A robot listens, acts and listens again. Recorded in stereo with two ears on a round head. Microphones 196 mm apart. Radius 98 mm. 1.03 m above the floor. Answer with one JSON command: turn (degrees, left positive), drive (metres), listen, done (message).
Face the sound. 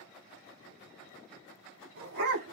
{"turn": -50}
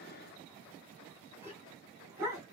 {"turn": -15}
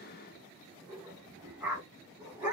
{"done": "Found it: a dog barking, straight ahead."}